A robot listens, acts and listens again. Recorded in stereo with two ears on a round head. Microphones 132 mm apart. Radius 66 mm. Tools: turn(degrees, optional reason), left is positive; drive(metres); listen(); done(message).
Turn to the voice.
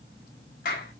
listen()
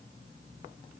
listen()
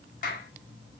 done("I can't make out anyone speaking to turn to.")